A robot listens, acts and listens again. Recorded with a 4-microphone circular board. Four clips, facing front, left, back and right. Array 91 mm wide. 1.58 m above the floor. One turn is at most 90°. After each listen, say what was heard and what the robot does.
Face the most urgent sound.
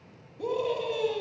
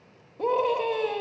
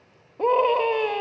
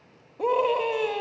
The scream: 175° right. Turn 90° right.
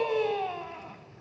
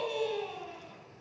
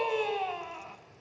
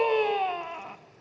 The scream is now 95° right. Turn 90° right.
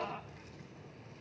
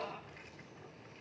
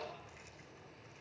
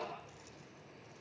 Keep listening.
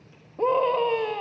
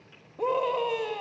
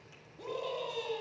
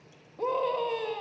Facing the scream, 2 to 4 m away.